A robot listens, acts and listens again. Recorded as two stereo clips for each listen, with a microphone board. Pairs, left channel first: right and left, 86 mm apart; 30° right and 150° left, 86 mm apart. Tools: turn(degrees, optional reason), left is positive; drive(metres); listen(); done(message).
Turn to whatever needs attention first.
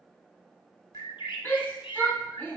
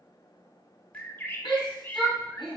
turn(degrees=-25, reason="The shout: 25° right.")
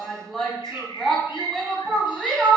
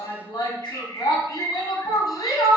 done("Facing the shout.")